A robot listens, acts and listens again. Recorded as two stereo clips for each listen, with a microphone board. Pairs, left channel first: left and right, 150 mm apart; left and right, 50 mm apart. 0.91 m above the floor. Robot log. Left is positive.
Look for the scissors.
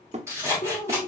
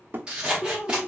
note: The scissors: about 20° right or 160° right.
cmd yaw -20
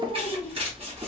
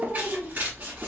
note: So it is at 140° right.
cmd yaw -140
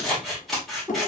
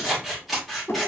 end: Found it: scissors, straight ahead.